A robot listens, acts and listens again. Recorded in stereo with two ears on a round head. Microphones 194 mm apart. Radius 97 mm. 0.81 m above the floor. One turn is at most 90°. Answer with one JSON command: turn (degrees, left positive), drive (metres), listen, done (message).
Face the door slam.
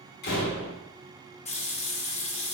{"turn": 50}
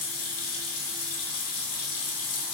{"listen": true}
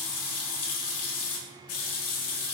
{"done": "I heard a door slam, but can't make it out now. It was about straight ahead or 80° left."}